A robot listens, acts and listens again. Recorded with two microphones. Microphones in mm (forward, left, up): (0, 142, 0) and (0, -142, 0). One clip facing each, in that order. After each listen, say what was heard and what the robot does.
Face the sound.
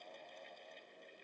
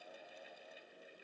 Keep listening.
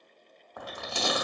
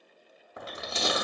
The chewing: about 20° right or 160° right. Turn 20° right.
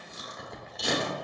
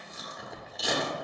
Facing the chewing, under 1 m away.